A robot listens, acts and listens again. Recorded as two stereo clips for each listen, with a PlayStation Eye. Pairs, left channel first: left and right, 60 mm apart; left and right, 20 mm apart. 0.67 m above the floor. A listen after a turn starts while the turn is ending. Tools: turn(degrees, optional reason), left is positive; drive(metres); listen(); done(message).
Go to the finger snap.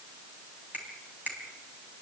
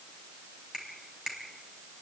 turn(degrees=-30, reason="The finger snap: about 30° right or 150° right.")
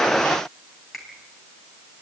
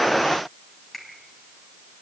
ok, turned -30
drive(metres=1.0)
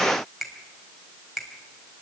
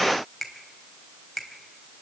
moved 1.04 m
drive(metres=1.0)
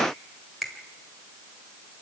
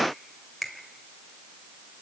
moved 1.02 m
drive(metres=1.0)
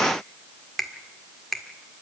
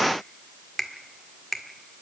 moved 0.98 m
drive(metres=1.0)
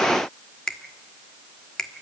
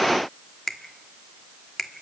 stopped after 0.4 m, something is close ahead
turn(degrees=10, reason="The finger snap is now 10° left.")
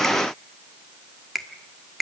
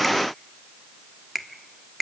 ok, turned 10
done("Arrived at the finger snap, straight ahead.")